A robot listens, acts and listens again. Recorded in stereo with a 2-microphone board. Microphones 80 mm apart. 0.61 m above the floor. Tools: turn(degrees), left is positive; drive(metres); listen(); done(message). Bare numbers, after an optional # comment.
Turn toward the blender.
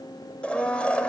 turn(30)
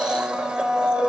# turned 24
# So it is at 10° right.
turn(-10)
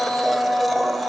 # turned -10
done("Found it: a blender, straight ahead.")